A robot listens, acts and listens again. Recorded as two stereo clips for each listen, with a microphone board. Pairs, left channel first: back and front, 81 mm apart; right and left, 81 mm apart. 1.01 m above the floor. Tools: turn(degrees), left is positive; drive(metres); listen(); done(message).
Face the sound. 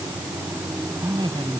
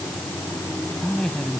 turn(degrees=-10)
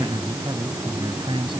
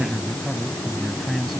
done("Found it: a man speaking, straight ahead.")